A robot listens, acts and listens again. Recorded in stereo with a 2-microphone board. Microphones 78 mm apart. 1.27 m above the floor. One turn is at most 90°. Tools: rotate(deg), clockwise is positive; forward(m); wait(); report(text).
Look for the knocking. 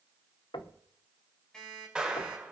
rotate(-90)
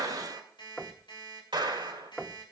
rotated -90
rotate(-10)
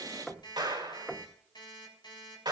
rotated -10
report("Found it: knocking, straight ahead.")